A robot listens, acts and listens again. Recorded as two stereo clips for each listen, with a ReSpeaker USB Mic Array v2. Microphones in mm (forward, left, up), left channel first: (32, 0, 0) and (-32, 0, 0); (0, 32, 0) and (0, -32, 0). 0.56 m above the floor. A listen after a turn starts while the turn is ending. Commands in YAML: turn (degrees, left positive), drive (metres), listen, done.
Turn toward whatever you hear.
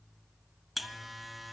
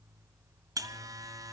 turn: -90
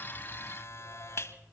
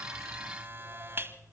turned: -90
turn: -40
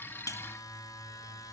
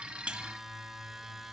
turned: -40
done: "Found it: a buzzer, straight ahead."